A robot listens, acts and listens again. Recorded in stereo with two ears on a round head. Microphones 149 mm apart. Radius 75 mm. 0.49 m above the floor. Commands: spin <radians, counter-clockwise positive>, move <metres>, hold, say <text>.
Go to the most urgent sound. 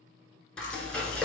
hold
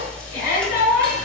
spin 1.13
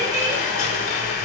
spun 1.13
hold
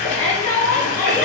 spin 0.17
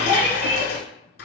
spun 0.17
move 1.0
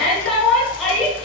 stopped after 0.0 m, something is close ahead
say Something is in my way. I am facing the shout but have not reached it.